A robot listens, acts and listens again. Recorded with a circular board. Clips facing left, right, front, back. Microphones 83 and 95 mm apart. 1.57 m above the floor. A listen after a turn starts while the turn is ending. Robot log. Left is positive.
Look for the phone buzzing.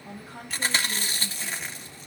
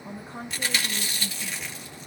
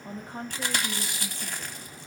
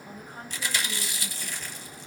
cmd idle
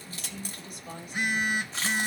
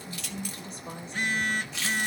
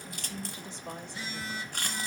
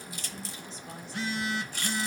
note: The phone buzzing: 165° left.
cmd yaw +165
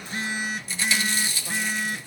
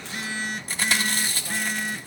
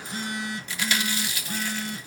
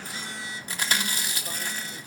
end: Facing the phone buzzing, 1 to 2 m away.